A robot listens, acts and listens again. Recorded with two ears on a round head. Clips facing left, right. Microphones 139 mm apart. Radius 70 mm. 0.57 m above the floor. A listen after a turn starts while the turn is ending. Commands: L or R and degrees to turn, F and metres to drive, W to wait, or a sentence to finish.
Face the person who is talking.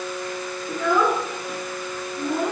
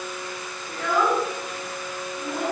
L90
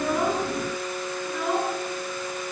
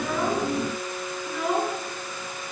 Facing the child speaking, over 4 m away.